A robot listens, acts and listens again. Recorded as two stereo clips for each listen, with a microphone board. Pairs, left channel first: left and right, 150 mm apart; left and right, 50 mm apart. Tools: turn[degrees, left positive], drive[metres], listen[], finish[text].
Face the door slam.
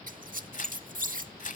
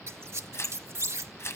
Action: listen[]
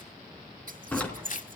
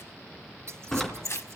Action: turn[30]
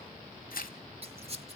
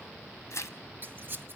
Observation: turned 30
Action: listen[]
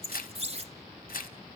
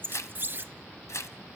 Action: finish[I heard a door slam, but can't make it out now. It was about 20° right or 140° left.]